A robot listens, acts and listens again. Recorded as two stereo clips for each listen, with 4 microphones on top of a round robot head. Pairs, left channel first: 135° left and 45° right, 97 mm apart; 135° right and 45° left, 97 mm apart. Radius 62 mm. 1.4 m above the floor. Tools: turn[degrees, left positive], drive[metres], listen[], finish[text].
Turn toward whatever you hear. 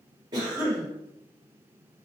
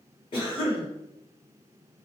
Thought: The cough: 95° right.
Action: turn[-95]
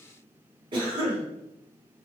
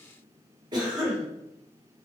Action: finish[Found it: a cough, straight ahead.]